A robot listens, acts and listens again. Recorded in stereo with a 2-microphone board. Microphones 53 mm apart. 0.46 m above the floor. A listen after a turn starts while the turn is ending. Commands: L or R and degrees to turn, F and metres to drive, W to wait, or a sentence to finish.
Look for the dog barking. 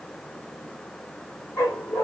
L70
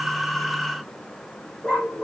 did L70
L15
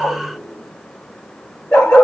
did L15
L10
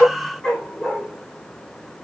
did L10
Facing the dog barking, over 4 m away.